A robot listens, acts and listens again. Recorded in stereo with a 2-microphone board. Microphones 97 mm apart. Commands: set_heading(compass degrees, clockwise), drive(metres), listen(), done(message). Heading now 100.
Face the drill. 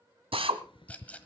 set_heading(170)
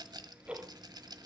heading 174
listen()
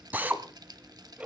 set_heading(194)
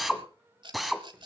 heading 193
done("Found it: a drill, straight ahead, 1 to 2 m away.")